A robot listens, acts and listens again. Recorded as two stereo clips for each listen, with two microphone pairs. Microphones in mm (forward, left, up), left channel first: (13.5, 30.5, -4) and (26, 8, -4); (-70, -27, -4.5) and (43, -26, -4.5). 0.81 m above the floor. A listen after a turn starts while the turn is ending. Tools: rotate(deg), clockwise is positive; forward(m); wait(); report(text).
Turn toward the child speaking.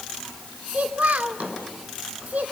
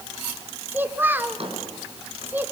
rotate(75)
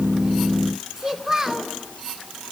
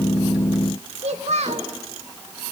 rotate(-15)
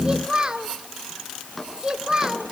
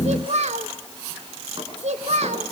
report("Found it: a child speaking, straight ahead, 1 to 2 m away.")